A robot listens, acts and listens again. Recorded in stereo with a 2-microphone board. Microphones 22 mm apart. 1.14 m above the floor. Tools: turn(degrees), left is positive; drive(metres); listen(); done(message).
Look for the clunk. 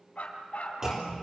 turn(degrees=-20)
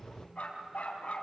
listen()
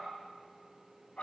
done("I heard a clunk, but can't make it out now. It was about straight ahead or 140° right.")